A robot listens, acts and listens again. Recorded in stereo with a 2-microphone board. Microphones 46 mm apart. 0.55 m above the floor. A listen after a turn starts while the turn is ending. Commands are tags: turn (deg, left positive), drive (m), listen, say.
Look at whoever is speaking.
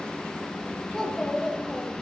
<turn deg="20"/>
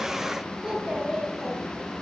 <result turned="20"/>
<turn deg="30"/>
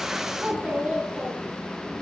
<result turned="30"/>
<turn deg="-30"/>
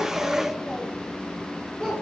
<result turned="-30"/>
<turn deg="15"/>
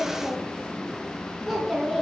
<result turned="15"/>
<say>Facing the child speaking, over 4 m away.</say>